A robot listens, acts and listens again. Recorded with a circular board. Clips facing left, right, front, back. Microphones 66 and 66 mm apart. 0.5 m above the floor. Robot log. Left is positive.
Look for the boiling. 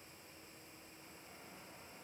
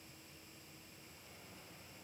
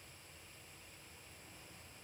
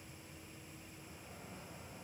cmd idle
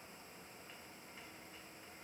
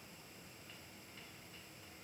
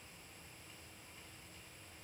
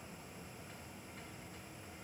cmd idle
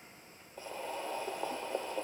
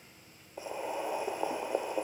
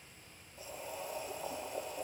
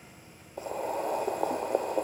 note: The boiling: 160° right.
cmd yaw -160
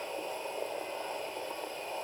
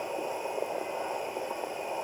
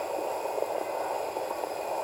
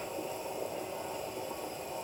note: The boiling is now 20° right.
cmd yaw -20
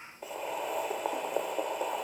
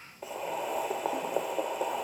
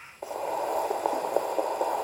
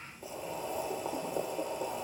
end: Found it: boiling, straight ahead.